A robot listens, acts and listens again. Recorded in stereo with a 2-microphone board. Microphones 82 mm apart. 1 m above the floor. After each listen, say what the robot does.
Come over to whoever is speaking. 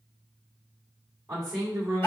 Turn 30° right.
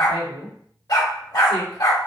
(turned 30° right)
Turn 115° right.
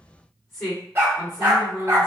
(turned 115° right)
Turn 30° left.
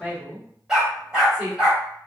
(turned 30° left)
Drive 1.0 m forward.
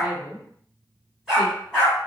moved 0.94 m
Turn 10° left.
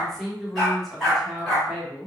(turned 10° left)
Drive 1.0 m forward.
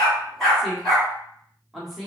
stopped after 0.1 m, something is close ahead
Arrived at the woman speaking, straight ahead.